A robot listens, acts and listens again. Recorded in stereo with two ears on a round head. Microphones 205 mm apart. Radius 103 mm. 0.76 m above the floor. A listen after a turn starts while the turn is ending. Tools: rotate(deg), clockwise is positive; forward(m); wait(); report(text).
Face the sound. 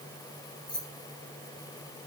rotate(-20)
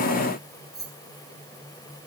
report("Facing the keys jangling.")